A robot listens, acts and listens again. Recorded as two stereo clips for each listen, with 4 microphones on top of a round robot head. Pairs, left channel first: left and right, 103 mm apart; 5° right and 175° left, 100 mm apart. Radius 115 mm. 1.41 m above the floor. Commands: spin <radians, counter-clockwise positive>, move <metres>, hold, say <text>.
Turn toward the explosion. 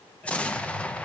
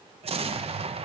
spin 2.97
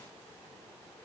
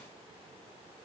say Facing where the explosion came from. I can't hear it now.